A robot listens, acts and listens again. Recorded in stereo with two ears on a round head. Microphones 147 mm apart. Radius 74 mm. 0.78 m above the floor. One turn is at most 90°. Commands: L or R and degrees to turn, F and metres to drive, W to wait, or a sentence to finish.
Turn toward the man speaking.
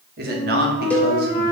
R65
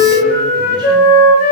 W
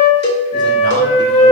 W
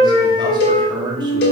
R30
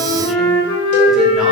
W
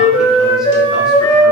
W
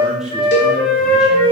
Found it: a man speaking, straight ahead, 2 to 4 m away.